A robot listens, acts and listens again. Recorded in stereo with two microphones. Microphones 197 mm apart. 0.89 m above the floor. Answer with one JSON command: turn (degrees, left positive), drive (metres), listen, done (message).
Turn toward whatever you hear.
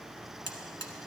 {"turn": -60}
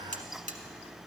{"turn": -45}
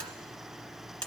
{"done": "Facing the buzzer, 1 to 2 m away."}